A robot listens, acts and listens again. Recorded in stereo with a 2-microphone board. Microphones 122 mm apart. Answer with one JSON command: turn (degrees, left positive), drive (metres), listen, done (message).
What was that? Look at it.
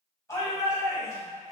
{"turn": 25}
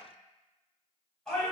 {"done": "Facing the shout, 1 to 2 m away."}